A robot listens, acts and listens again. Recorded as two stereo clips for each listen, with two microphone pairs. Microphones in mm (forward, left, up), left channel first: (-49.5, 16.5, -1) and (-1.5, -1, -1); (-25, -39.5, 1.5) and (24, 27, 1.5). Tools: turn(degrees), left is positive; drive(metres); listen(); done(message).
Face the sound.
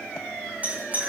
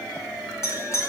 turn(degrees=-80)
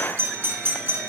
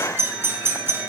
done("Facing the doorbell.")